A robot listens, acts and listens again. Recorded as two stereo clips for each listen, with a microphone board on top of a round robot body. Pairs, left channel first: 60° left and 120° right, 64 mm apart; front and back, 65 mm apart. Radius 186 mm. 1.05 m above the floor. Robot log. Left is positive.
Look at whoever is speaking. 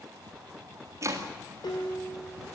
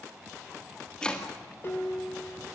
cmd idle
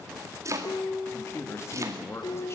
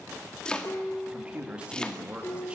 note: The man speaking: 105° left.
cmd yaw +105
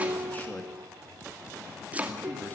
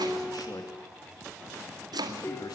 cmd idle
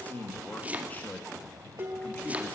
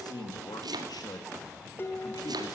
end: Found it: a man speaking, straight ahead.